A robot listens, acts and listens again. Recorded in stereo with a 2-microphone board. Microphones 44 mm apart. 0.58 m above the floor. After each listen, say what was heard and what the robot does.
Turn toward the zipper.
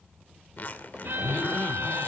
The zipper: about 45° left or 135° left. Turn 45° left.
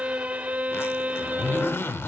So it is at 90° left. Turn 90° left.
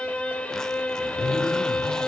Keep listening.
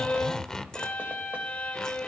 The zipper is now 15° left. Turn 15° left.
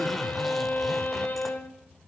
Keep listening.
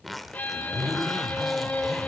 Facing the zipper.